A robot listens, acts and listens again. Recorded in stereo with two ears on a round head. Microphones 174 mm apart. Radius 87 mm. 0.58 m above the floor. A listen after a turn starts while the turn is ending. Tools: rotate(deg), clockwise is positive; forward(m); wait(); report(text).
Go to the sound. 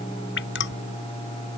rotate(-60)
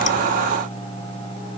wait()
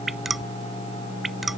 forward(1.0)
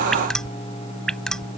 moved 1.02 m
forward(1.0)
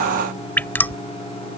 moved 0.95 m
rotate(-10)
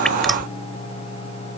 wait()
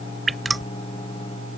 forward(1.0)
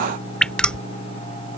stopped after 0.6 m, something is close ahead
report("Arrived at the dripping, straight ahead.")